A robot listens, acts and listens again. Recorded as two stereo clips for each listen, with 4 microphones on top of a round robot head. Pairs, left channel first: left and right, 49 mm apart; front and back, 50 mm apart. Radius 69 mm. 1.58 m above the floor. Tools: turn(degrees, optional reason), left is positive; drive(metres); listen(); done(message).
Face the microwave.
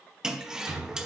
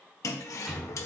turn(degrees=-105, reason="The microwave: 105° right.")
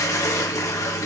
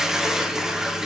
listen()
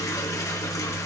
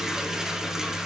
turn(degrees=10, reason="The microwave is now 10° left.")
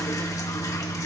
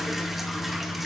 done("Facing the microwave.")